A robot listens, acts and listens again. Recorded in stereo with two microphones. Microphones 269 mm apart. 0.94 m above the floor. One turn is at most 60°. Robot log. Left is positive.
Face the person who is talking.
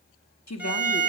note: The woman speaking: about 75° left or 105° left.
cmd yaw +60
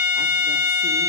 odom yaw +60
cmd idle
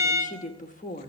note: So it is at 30° left.
cmd yaw +30
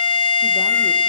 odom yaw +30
cmd idle
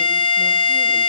cmd idle
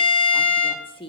note: The woman speaking is now 20° left.
cmd yaw +20
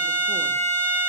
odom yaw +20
cmd idle
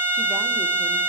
cmd idle
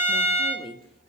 end: Found it: a woman speaking, straight ahead, 1 to 2 m away.